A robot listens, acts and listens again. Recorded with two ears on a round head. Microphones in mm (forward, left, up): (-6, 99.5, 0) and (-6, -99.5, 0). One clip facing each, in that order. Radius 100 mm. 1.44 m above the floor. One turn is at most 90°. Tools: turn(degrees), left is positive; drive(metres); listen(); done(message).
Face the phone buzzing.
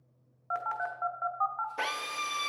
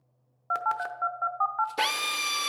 turn(degrees=-55)
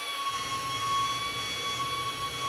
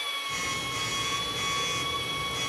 listen()
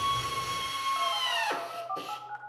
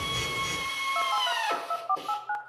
turn(degrees=-70)
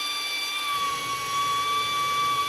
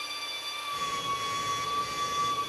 listen()
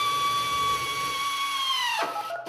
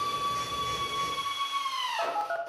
done("Facing the phone buzzing, under 1 m away.")